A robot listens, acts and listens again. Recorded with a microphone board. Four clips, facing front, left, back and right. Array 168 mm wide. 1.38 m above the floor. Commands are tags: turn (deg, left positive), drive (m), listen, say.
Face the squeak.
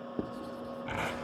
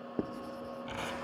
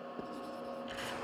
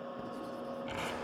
<listen/>
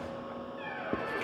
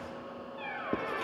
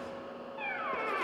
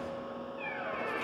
<turn deg="165"/>
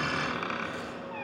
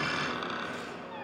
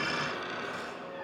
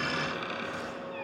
<turn deg="30"/>
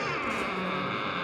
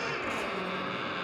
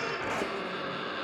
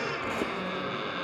<say>Facing the squeak, over 4 m away.</say>